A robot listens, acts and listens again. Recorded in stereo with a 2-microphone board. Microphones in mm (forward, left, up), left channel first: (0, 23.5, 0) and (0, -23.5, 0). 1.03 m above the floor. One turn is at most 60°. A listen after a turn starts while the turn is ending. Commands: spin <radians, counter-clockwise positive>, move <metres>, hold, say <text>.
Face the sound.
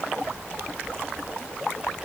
hold
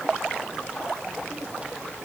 hold
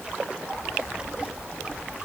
say I can't make out anything.